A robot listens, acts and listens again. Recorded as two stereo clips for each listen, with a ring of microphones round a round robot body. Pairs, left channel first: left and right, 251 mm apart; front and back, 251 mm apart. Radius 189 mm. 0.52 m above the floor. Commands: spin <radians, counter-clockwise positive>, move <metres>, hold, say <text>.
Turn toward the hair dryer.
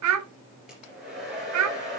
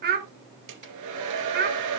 spin 3.14
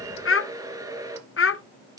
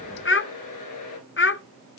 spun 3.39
spin -0.26
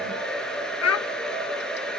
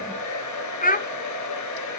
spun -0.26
say Facing the hair dryer, 2 to 4 m away.